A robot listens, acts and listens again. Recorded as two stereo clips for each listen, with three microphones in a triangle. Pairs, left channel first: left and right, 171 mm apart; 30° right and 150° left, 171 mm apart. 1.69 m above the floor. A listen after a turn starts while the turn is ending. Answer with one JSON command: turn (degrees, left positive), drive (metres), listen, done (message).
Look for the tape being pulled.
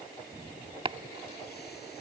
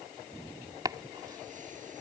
{"listen": true}
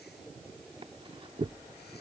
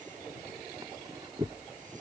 {"listen": true}
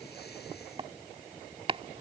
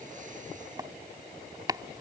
{"done": "I can't make out tape being pulled, only chopping."}